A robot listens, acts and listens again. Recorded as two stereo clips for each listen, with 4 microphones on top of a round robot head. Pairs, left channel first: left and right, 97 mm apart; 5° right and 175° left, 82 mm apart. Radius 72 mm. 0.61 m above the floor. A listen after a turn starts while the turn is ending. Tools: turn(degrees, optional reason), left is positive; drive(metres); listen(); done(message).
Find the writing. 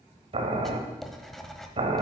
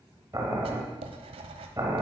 turn(degrees=180, reason="The writing: straight behind.")
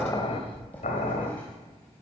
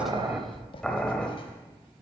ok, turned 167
turn(degrees=10, reason="The writing is now 10° left.")
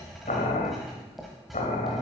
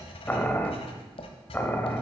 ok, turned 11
done("Found it: writing, straight ahead, 1 to 2 m away.")